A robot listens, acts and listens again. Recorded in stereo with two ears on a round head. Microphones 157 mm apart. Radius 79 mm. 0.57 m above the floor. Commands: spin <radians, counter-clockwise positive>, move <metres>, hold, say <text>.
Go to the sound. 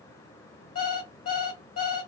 spin 0.96
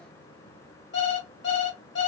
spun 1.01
spin 1.13
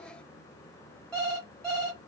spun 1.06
move 1.0
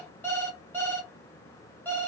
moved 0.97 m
spin 0.17
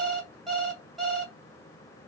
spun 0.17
move 1.0
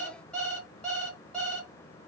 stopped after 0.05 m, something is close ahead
say Arrived at the alarm clock, straight ahead.